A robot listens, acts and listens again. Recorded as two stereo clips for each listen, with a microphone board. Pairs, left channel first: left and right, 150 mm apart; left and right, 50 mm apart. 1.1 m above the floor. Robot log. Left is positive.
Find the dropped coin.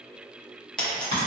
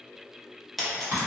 cmd yaw +30
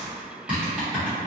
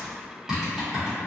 cmd idle
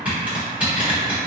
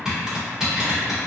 end: I heard a dropped coin, but can't make it out now. It was about 25° right or 145° left.